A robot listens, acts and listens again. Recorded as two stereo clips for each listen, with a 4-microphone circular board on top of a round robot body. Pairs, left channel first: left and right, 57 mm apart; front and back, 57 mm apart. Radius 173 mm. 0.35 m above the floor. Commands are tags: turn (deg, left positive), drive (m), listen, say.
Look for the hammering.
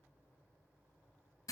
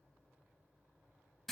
<listen/>
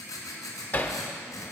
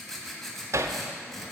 <turn deg="150"/>
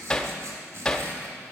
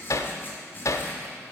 <turn deg="10"/>
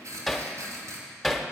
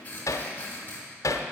<say>Found it: hammering, straight ahead, under 1 m away.</say>